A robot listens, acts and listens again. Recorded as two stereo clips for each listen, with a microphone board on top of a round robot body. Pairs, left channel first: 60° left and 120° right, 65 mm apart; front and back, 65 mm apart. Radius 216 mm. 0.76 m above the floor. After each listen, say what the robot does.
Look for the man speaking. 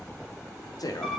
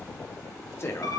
Turn 50° left.
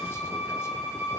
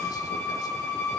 Keep listening.
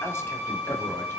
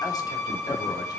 Keep listening.
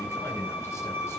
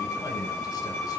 I heard a man speaking from this way, but can't make it out now.